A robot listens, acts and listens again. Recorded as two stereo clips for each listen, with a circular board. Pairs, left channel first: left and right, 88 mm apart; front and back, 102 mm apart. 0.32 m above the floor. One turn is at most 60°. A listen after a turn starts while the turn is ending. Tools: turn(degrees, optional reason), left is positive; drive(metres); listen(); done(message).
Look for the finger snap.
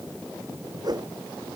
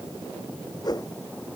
listen()
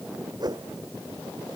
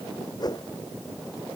listen()
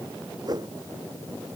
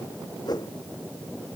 done("I can't make out a finger snap, only a whoosh.")